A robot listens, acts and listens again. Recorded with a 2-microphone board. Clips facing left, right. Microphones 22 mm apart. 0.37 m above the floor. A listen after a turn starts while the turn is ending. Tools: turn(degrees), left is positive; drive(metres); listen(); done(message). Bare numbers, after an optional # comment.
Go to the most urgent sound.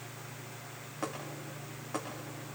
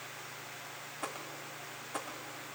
listen()
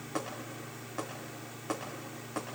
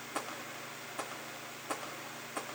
listen()
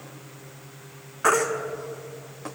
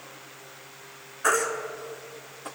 # The baby crying: about 30° left or 150° left.
turn(30)
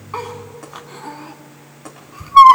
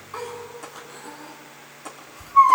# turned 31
# So it is at 115° left.
turn(115)
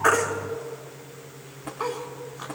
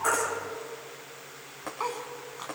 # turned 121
listen()
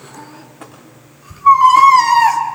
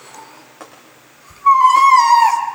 drive(1.0)
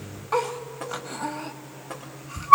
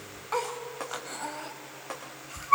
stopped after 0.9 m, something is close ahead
done("Arrived at the baby crying, straight ahead.")